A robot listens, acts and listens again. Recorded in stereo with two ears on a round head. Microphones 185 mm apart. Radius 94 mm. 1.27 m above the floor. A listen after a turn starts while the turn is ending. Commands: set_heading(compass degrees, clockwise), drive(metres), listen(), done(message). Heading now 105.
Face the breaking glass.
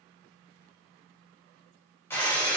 set_heading(75)
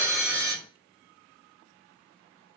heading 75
set_heading(95)
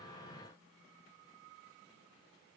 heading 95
done("I heard breaking glass from this way, but can't make it out now.")